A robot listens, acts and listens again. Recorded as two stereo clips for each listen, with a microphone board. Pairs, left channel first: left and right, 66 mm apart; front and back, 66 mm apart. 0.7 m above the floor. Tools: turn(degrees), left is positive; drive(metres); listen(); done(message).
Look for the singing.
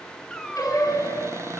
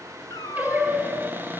turn(degrees=125)
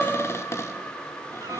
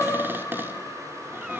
turn(degrees=30)
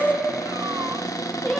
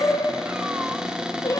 turn(degrees=15)
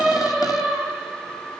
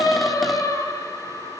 done("Found it: singing, straight ahead.")